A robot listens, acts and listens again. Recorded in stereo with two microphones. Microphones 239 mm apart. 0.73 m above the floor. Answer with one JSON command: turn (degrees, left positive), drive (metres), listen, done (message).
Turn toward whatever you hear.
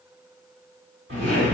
{"turn": -50}
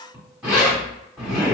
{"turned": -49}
{"done": "Facing the zipper."}